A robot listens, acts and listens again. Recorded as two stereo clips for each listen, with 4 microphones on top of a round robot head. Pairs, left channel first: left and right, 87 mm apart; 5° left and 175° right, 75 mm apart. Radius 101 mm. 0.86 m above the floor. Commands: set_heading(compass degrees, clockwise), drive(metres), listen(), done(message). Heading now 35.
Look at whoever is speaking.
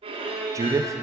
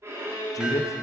set_heading(75)
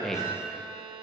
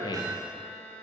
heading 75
done("Facing the man speaking.")